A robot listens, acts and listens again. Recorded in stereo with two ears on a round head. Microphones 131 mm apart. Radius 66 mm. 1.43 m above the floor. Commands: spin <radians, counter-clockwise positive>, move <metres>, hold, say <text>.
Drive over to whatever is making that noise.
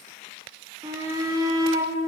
spin -0.35
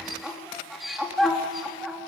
move 1.0
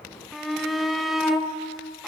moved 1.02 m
move 1.0
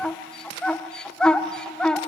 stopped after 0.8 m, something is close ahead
say Arrived at the shout, straight ahead.